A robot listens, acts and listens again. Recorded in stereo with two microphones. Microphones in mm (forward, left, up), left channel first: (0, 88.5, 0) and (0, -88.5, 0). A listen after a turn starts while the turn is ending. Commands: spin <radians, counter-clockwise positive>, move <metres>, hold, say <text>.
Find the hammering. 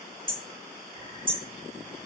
spin -0.61
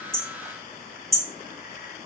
say Facing the hammering, 1 to 2 m away.